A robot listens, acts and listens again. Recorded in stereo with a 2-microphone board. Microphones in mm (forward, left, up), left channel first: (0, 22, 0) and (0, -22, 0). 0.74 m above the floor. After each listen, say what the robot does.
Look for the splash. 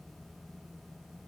Keep listening.
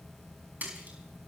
Turn 40° right.
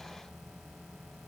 Keep listening.
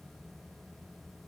I heard a splash, but can't make it out now. It was about straight ahead or 100° right.